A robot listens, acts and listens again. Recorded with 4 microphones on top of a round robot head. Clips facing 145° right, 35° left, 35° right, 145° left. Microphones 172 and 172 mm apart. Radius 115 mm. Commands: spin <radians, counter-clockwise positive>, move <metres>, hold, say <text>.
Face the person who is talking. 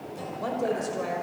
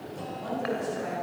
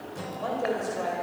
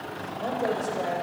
spin -2.53
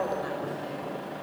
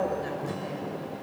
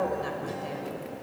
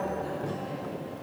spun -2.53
spin -0.61
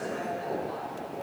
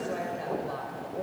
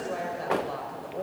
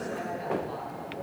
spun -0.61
say Found it: a woman speaking, straight ahead, over 4 m away.